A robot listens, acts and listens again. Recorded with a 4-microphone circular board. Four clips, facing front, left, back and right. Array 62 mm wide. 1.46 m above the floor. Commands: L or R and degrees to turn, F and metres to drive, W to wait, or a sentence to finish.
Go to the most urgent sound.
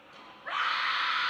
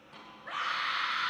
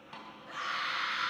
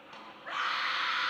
R20
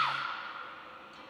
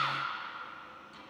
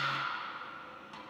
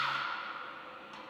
F1.0
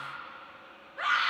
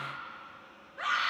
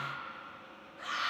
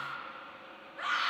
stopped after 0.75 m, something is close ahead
Something is in my way. I am facing the scream but have not reached it.